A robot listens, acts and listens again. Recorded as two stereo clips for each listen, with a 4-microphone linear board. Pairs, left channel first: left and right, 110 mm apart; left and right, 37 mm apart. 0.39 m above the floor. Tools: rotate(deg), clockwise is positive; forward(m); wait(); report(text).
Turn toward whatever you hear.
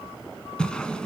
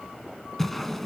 rotate(-30)
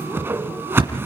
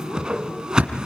rotate(20)
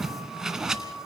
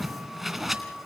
report("Facing the whoosh.")